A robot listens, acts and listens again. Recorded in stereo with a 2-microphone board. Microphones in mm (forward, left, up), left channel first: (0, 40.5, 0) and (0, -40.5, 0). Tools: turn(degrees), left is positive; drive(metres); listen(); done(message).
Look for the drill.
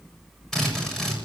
turn(degrees=30)
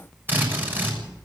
turn(degrees=-25)
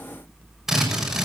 done("Found it: a drill, straight ahead.")